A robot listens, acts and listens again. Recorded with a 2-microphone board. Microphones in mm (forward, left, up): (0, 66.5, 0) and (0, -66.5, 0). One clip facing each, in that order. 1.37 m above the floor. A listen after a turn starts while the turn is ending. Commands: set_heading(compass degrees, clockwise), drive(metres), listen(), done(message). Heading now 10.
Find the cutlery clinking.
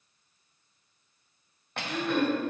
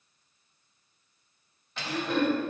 set_heading(310)
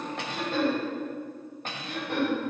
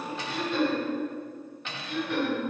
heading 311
set_heading(261)
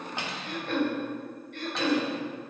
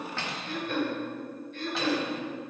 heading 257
done("Found it: cutlery clinking, straight ahead.")